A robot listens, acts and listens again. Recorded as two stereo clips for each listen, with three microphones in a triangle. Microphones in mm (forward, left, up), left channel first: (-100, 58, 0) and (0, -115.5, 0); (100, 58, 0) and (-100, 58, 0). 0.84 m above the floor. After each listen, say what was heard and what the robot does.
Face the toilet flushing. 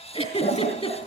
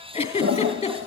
The toilet flushing: 175° left. Turn 175° left.
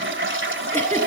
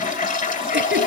The toilet flushing is now 45° right. Turn 45° right.
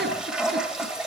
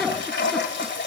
The toilet flushing is now 25° left. Turn 25° left.
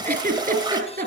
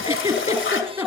The toilet flushing is now 10° left. Turn 10° left.
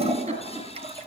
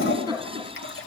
Found it: a toilet flushing, straight ahead, 2 to 4 m away.